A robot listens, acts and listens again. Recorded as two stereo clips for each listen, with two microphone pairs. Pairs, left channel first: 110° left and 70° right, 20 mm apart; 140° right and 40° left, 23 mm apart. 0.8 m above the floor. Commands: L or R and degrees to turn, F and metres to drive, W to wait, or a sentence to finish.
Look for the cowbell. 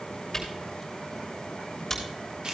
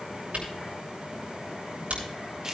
W
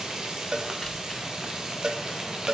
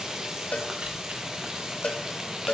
R115
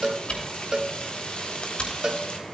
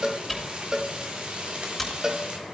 R15
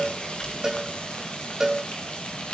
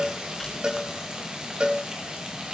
Found it: a cowbell, straight ahead, under 1 m away.